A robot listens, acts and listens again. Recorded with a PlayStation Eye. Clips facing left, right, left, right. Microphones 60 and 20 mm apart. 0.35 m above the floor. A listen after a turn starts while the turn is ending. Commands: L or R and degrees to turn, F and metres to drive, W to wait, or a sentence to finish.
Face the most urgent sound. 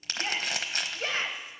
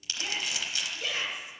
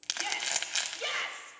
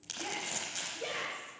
L45
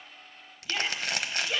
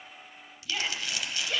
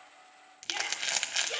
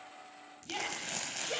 L10
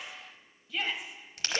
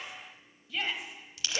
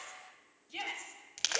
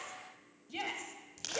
Found it: a shout, straight ahead, 1 to 2 m away.